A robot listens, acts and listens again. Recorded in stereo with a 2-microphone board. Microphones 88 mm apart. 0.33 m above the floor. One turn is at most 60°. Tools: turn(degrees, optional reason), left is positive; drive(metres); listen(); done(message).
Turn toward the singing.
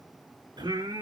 turn(degrees=-55, reason="The singing: about 55° right or 125° right.")
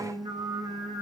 turn(degrees=-55, reason="So it is at 55° right.")
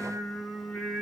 done("Facing the singing.")